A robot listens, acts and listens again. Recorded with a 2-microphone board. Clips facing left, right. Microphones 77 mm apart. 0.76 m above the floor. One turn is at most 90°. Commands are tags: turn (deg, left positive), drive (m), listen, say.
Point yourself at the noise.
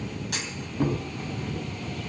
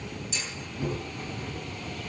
<turn deg="60"/>
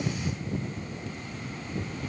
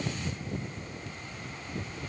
<listen/>
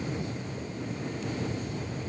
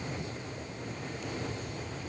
<say>I heard a clunk, but can't make it out now. It was about straight ahead or 60° left.</say>